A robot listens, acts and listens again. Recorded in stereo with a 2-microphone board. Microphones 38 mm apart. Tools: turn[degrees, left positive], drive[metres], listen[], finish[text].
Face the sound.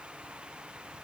Action: listen[]
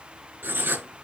Thought: The writing: about 70° right or 110° right.
Action: turn[-70]
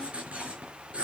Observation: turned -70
Thought: So it is at 30° right.
Action: turn[-30]
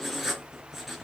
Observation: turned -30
Action: finish[Found it: writing, straight ahead.]